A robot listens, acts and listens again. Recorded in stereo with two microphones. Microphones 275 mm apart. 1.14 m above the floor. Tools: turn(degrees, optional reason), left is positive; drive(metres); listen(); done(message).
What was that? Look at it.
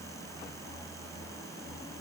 listen()
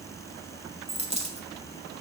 turn(degrees=-25, reason="The dropped coin: about 25° right or 155° right.")
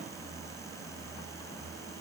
listen()
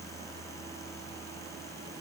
done("I heard a dropped coin, but can't make it out now. It was about straight ahead or 130° right.")